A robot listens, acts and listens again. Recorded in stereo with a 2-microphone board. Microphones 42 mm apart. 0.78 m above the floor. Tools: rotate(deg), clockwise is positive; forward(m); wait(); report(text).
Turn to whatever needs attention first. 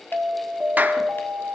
rotate(75)
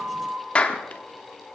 rotate(20)
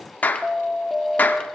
rotate(10)
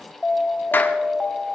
report("Found it: an alarm, straight ahead, 1 to 2 m away.")